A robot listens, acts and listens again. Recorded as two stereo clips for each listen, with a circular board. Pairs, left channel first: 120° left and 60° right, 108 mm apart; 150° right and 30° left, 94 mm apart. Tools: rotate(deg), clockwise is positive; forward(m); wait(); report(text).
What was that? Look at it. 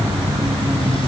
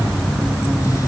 wait()
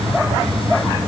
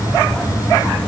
wait()
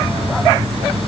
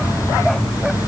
report("I can't make out anything to turn to.")